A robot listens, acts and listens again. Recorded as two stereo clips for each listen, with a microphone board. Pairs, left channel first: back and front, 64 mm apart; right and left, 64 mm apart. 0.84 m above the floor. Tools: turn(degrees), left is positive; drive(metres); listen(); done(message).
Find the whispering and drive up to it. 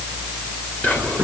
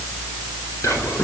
turn(degrees=-120)
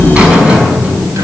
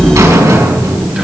listen()
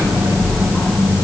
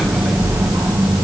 listen()
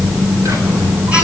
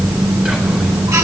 done("I heard whispering from this way, but can't make it out now. I did not reach it.")